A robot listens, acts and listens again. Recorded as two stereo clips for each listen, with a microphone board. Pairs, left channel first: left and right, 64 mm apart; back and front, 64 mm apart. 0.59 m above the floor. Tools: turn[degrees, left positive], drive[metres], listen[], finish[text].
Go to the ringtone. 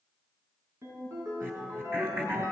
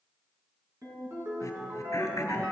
Thought: The ringtone: 45° right.
Action: turn[-45]
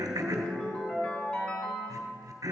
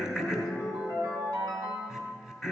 Thought: The ringtone is now 15° left.
Action: turn[15]
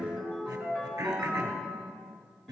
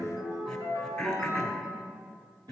Action: drive[1.0]
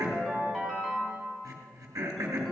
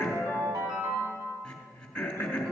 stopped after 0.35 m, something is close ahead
Action: finish[Something is in my way. I am facing the ringtone but have not reached it.]